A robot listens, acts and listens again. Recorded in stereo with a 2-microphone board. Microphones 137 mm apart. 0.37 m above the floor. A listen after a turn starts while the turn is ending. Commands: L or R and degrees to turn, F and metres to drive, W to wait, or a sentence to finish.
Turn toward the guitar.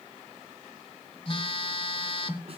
W
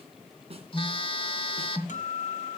L65
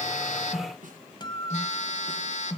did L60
L40
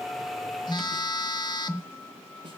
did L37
W
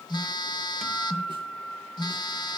Facing the guitar.